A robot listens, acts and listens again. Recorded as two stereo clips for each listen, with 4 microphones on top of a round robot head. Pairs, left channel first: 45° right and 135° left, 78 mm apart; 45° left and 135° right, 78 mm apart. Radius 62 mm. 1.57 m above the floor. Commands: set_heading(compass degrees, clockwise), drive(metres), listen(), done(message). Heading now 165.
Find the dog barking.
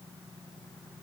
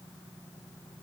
listen()
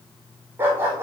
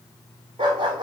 set_heading(330)
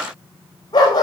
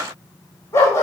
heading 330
set_heading(340)
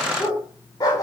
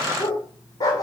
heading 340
done("Found it: a dog barking, straight ahead.")